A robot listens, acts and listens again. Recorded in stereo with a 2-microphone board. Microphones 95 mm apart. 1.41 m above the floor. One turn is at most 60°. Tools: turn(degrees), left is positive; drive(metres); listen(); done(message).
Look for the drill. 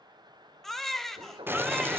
turn(degrees=-60)
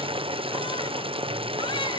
listen()
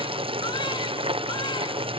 listen()
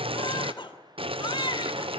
done("I heard a drill, but can't make it out now. It was about straight ahead or 60° right.")